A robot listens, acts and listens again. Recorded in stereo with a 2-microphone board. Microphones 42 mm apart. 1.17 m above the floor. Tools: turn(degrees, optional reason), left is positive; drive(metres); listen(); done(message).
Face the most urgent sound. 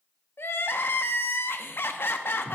turn(degrees=65, reason="The crying: about 65° left or 115° left.")
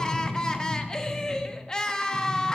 turn(degrees=20, reason="So it is at 20° left.")
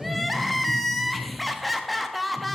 done("Found it: crying, straight ahead, under 1 m away.")